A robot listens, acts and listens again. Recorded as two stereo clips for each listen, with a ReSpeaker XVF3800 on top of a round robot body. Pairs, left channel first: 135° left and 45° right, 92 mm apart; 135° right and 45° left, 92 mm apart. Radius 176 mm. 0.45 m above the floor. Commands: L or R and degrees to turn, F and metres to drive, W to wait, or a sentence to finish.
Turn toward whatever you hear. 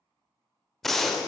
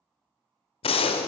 R140
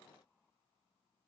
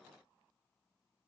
Facing where the gunshot came from. I can't hear it now.